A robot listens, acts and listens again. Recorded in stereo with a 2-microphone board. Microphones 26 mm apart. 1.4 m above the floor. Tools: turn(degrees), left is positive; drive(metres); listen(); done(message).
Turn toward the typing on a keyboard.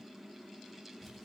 listen()
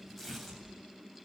listen()
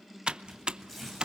turn(degrees=-35)
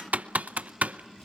turn(degrees=-105)
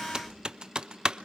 turn(degrees=-30)
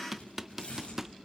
turn(degrees=-10)
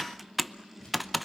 done("Facing the typing on a keyboard, under 1 m away.")